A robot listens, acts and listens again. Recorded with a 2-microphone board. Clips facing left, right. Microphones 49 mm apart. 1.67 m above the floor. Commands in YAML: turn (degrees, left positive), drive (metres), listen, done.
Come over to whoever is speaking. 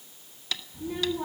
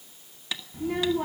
turn: -70
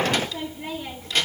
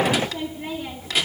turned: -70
turn: -10
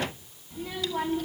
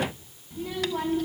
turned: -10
drive: 1.0
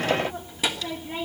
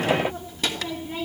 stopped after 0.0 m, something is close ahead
turn: 10
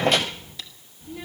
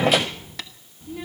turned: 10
done: "Something is in my way. I am facing the child speaking but have not reached it."